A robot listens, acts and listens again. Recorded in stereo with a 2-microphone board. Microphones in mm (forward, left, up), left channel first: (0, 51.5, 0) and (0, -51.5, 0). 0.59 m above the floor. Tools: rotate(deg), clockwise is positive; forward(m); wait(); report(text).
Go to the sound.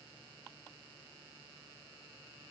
wait()
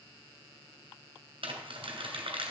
rotate(60)
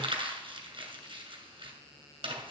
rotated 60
rotate(60)
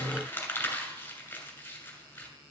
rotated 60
rotate(-20)
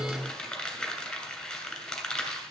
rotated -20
forward(1.0)
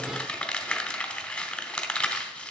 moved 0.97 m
rotate(-10)
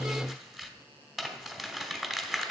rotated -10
forward(1.0)
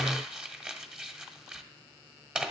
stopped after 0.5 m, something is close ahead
rotate(10)
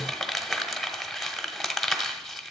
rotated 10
report("I am next to the crumpling.")